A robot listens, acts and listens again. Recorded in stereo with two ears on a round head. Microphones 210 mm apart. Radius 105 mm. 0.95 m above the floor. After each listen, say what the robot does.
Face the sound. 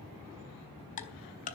Turn 35° left.
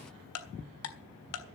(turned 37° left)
Turn 110° left.
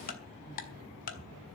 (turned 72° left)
Turn 35° left.
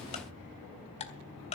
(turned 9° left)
Turn 30° left.
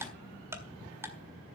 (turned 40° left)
Turn 10° right.
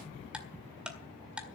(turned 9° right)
Found it: ticking, straight ahead, 1 to 2 m away.